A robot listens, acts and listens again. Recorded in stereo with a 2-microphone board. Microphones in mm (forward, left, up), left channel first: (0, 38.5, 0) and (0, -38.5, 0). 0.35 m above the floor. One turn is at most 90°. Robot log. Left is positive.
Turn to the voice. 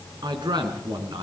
cmd yaw -90
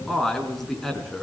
end: Facing the man speaking.